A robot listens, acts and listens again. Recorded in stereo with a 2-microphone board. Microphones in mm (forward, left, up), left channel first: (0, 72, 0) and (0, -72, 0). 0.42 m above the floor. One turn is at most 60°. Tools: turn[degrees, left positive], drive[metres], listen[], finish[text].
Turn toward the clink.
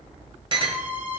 Thought: The clink: about 35° right or 145° right.
Action: turn[-35]
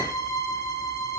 Action: listen[]
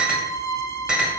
Action: finish[Found it: a clink, straight ahead.]